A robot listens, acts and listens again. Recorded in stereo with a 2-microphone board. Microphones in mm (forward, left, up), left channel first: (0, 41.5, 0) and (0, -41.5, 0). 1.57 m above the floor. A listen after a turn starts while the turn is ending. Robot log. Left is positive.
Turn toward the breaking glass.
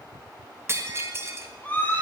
note: The breaking glass: about 30° right or 150° right.
cmd yaw -30
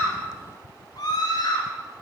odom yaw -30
cmd idle
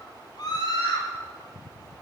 end: I heard breaking glass, but can't make it out now. It was about straight ahead or 120° right.